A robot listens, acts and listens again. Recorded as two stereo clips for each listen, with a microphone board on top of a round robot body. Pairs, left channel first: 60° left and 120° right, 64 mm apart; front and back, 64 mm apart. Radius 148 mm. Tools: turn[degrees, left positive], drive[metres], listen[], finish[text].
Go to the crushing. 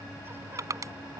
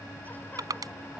Thought: The crushing: 160° right.
Action: turn[-160]
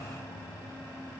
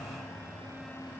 Action: listen[]
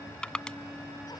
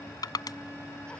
Thought: The crushing is now 20° right.
Action: turn[-20]
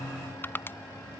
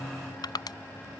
Action: drive[1.0]
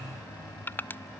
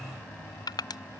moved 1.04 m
Action: drive[1.0]
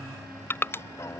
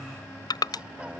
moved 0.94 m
Action: drive[1.0]
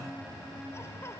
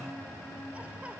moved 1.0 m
Action: listen[]
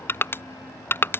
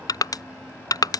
Action: drive[1.0]
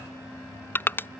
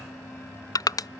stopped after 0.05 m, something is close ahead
Action: finish[Arrived at the crushing, straight ahead.]